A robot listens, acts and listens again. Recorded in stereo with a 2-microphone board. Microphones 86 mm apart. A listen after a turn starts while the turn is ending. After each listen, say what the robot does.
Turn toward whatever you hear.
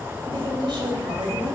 Turn 70° right.
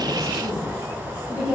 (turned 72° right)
Turn 15° right.
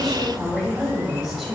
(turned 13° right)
Facing the woman speaking, 2 to 4 m away.